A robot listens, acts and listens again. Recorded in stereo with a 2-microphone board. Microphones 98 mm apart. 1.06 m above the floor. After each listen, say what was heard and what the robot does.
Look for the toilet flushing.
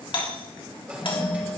Turn 30° right.
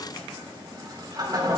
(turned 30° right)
So it is at 135° right. Turn 135° right.
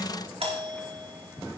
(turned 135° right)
The toilet flushing is now 20° right. Turn 20° right.
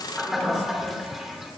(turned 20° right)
Found it: a toilet flushing, straight ahead.